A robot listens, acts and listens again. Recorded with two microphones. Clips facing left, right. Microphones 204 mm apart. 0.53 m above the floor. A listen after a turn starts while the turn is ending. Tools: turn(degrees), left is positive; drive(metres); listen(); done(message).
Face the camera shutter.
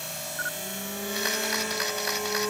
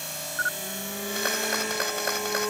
turn(degrees=-50)
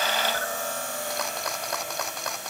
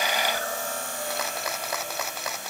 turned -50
done("Found it: a camera shutter, straight ahead.")